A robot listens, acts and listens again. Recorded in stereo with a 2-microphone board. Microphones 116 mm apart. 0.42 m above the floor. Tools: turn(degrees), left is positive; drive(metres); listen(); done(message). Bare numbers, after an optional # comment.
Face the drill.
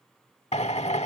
# The drill: about 70° left or 110° left.
turn(70)
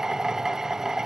done("Facing the drill.")